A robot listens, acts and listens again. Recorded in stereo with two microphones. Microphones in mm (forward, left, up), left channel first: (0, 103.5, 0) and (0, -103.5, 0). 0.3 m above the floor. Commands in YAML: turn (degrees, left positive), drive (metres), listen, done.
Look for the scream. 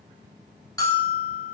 listen: true
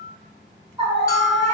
turn: -25
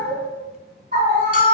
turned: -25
turn: -125
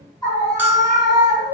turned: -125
turn: 25
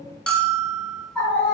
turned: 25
turn: 10
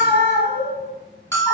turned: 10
done: "Found it: a scream, straight ahead, 2 to 4 m away."